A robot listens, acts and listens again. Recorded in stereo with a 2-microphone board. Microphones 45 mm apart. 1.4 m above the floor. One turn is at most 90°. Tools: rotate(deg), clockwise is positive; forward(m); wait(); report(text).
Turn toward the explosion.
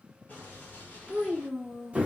rotate(-40)
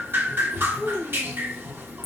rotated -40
wait()
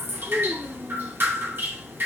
report("I heard an explosion, but can't make it out now. It was about straight ahead or 100° left.")